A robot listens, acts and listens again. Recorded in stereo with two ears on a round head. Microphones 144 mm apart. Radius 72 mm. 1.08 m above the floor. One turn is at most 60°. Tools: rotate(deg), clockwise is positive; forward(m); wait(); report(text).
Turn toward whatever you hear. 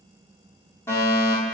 rotate(-15)
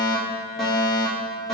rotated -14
report("Found it: a fire alarm, straight ahead.")